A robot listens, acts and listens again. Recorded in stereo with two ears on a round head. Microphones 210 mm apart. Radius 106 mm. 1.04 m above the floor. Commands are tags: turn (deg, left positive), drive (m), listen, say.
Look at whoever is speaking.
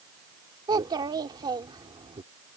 <turn deg="-15"/>
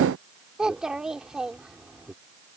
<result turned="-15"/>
<say>Facing the child speaking.</say>